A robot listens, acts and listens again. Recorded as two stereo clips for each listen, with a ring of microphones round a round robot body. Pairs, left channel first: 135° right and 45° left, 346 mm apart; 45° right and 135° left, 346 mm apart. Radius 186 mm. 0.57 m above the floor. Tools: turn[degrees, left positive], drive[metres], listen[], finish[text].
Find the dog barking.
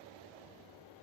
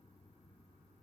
Action: listen[]
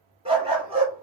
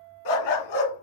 Thought: The dog barking: 30° right.
Action: turn[-30]
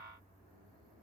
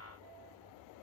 Action: listen[]
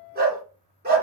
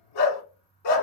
Thought: The dog barking is now 20° right.
Action: turn[-20]
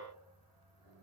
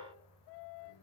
Action: listen[]
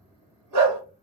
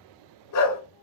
Action: finish[Facing the dog barking, 1 to 2 m away.]